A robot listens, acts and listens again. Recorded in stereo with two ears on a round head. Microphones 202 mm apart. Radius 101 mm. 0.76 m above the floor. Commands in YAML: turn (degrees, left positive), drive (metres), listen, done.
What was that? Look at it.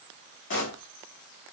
turn: 55
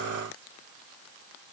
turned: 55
listen: true
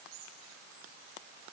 done: "I heard a pop, but can't make it out now. It was about straight ahead or 70° left."